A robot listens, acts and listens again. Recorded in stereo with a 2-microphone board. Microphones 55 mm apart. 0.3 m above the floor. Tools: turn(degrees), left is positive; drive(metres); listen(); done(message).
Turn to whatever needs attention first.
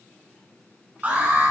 turn(degrees=-30)
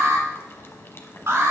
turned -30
turn(degrees=-115)
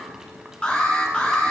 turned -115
turn(degrees=25)
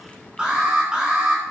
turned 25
turn(degrees=-15)
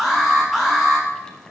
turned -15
done("Facing the alarm, 2 to 4 m away.")